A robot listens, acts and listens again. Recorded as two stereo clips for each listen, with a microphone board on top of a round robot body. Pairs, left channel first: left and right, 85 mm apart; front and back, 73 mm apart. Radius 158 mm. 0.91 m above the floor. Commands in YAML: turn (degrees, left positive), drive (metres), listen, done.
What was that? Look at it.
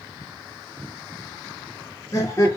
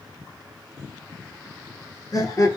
turn: 35
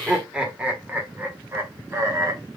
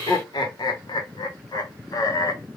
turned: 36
turn: -40
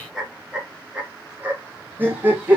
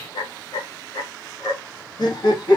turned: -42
turn: -20
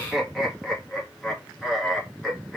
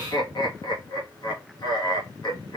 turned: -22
done: "Found it: laughter, straight ahead, 1 to 2 m away."